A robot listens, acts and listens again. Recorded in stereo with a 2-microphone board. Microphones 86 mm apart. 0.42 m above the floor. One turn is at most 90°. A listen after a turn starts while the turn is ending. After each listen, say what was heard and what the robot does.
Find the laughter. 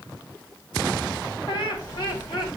The laughter: about 65° left or 115° left. Turn 65° left.
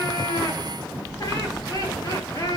So it is at 50° left. Turn 50° left.
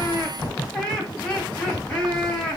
The laughter is now 15° left. Turn 15° left.
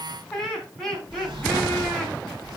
Facing the laughter.